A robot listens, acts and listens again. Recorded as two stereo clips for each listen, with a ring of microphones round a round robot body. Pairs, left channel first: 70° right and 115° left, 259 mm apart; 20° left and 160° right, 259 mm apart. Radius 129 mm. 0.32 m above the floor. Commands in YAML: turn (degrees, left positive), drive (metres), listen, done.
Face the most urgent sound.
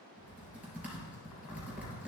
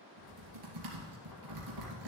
listen: true
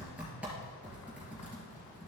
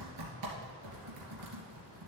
listen: true
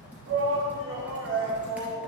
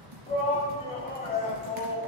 turn: 85
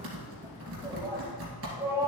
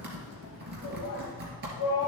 turn: 35
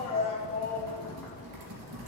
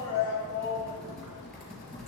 done: "Found it: a shout, straight ahead."